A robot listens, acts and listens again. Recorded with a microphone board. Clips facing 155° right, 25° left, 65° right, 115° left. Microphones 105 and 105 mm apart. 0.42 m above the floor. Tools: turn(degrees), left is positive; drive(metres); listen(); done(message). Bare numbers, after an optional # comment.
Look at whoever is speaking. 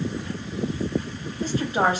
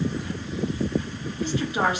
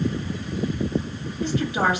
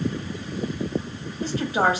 # The woman speaking: 160° left.
turn(160)
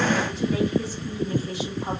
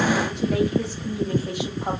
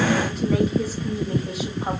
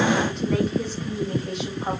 # The woman speaking is now 20° left.
turn(20)
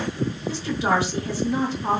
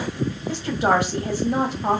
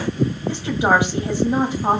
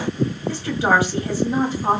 done("Facing the woman speaking, 2 to 4 m away.")